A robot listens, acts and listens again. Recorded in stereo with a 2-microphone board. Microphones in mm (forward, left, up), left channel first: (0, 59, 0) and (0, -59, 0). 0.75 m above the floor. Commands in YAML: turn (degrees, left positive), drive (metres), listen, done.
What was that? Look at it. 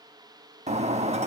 turn: -90
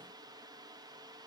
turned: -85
done: "I heard breaking glass from this way, but can't make it out now."